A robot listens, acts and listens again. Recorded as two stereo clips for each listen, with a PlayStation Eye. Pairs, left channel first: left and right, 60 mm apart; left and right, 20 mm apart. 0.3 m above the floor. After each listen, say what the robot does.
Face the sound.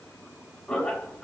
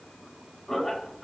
Turn 30° left.
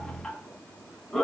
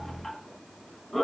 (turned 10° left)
Turn 30° left.
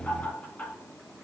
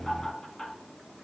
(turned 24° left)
Turn 20° left.
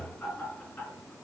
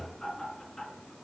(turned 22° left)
Turn 145° left.
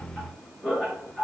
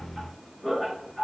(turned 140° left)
Turn 15° left.
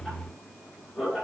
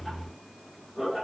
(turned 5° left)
Turn 10° left.
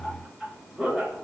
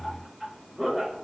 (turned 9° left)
Found it: laughter, straight ahead.